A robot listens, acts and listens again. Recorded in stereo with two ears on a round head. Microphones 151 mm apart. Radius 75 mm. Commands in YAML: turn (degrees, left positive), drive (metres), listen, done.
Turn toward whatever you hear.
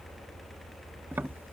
turn: -30
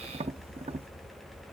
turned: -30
turn: -135
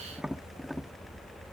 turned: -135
done: "Facing the tapping."